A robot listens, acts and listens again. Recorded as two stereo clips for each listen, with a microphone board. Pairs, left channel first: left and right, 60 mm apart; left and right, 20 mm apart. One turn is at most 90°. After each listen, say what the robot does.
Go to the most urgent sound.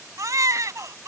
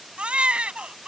Turn 70° right.
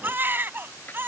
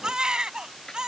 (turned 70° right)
Turn 35° right.
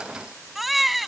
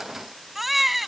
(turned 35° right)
Drive 1.0 m forward.
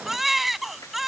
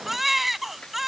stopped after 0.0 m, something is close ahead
Blocked. The baby crying is further on, straight ahead.